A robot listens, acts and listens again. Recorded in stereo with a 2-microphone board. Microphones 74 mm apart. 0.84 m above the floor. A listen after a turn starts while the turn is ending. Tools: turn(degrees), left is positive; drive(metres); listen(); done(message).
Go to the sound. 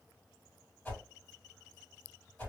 turn(degrees=20)
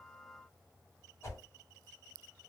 turn(degrees=135)
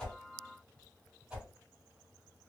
turn(degrees=-10)
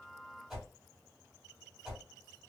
drive(metres=1.0)
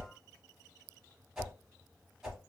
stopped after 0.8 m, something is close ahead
turn(degrees=-10)
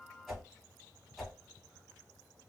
done("Arrived at the whoosh, straight ahead.")